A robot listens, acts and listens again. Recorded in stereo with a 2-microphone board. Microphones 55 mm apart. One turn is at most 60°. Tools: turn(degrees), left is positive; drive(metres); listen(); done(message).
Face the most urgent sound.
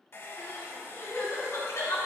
turn(degrees=60)
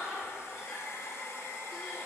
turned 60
done("Found it: crying, straight ahead.")